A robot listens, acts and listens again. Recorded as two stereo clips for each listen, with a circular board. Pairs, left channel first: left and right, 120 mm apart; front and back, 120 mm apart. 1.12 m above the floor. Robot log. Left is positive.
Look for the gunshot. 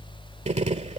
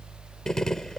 note: The gunshot: 85° right.
cmd yaw -85
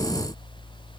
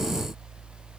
end: Facing where the gunshot came from. I can't hear it now.